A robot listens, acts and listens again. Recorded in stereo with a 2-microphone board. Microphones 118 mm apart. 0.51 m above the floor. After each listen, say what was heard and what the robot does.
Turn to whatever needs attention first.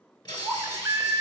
The baby crying: about 30° right or 150° right. Turn 30° right.
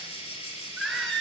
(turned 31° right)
Facing the baby crying, under 1 m away.